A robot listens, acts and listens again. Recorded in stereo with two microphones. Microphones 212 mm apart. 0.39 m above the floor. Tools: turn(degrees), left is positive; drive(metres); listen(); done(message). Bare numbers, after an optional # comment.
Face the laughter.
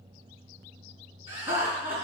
# The laughter: about 25° right or 155° right.
turn(-25)
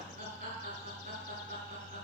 # So it is at 130° right.
turn(-130)
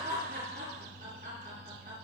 # The laughter is now 40° right.
turn(-40)
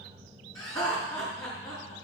# The laughter is now 15° left.
turn(15)
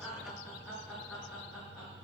# The laughter is now 10° left.
turn(10)
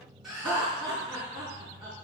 done("Facing the laughter.")